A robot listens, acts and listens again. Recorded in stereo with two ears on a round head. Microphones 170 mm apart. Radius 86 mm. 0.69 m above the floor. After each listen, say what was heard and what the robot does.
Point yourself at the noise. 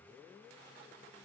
Keep listening.
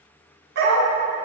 The dog barking: about 65° right or 115° right. Turn 65° right.
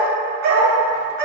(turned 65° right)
So it is at 55° right. Turn 55° right.
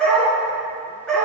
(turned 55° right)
Facing the dog barking.